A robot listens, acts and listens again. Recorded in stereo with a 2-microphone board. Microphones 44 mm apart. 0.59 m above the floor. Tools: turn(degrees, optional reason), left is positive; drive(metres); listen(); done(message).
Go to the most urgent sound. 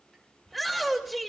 turn(degrees=30)
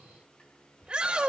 turn(degrees=-30, reason="So it is at 30° right.")
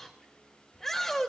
turn(degrees=10, reason="The shout is now 10° left.")
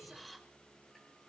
listen()
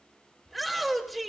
drive(metres=1.0)
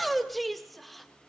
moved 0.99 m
drive(metres=1.0)
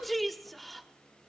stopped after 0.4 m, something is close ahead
done("I am next to the shout.")